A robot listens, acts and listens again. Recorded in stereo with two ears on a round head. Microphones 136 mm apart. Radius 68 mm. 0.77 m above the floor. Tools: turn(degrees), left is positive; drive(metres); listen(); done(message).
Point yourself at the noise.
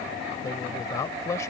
turn(degrees=20)
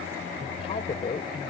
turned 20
turn(degrees=40)
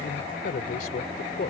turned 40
turn(degrees=120)
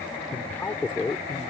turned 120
turn(degrees=10)
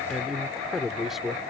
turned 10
done("Facing the man speaking.")